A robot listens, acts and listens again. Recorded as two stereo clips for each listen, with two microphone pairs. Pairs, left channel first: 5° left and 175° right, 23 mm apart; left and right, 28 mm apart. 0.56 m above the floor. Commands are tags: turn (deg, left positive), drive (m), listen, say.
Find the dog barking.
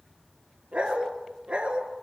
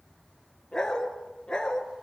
<turn deg="150"/>
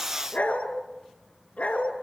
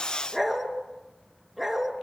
<say>Facing the dog barking.</say>